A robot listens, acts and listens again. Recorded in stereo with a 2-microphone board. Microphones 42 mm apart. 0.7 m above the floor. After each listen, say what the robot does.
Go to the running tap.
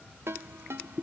Keep listening.
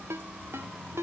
Keep listening.
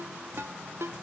I can't make out a running tap, only a ringtone.